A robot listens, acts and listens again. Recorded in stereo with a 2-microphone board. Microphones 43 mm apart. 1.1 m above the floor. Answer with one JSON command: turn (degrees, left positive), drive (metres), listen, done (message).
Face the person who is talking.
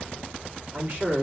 {"turn": -40}
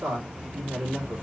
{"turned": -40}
{"turn": -100}
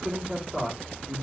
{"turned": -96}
{"done": "Facing the man speaking, 1 to 2 m away."}